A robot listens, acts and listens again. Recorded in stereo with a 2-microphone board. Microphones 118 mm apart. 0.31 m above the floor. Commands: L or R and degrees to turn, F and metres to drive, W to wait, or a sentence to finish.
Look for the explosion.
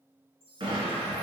R50
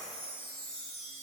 W
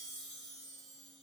I heard an explosion, but can't make it out now. It was about straight ahead or 80° right.